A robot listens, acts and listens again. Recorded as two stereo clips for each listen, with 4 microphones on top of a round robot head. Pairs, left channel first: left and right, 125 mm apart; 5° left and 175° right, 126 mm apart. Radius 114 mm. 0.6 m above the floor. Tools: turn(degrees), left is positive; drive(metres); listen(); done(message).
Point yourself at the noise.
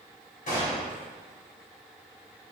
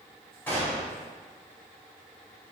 turn(degrees=85)
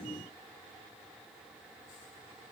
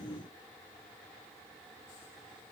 done("I heard a gunshot from this way, but can't make it out now.")